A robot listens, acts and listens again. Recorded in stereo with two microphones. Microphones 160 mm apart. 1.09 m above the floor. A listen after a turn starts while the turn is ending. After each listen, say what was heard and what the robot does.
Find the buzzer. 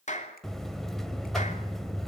Turn 30° left.
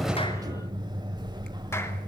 So it is at 30° right. Turn 30° right.
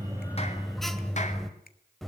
Facing the buzzer.